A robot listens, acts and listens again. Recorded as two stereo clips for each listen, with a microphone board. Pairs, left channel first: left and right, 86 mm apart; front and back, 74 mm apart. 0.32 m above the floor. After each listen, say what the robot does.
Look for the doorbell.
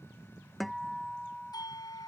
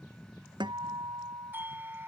Turn 120° left.
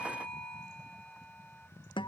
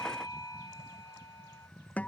Keep listening.
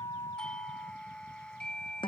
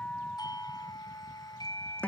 Turn 10° left.
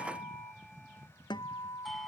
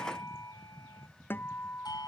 Found it: a doorbell, straight ahead.